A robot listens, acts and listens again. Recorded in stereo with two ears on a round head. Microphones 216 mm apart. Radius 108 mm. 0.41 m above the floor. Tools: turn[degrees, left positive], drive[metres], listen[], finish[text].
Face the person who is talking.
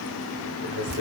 Thought: The man speaking: about 50° right or 130° right.
Action: turn[-50]
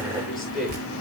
Action: finish[Found it: a man speaking, straight ahead, over 4 m away.]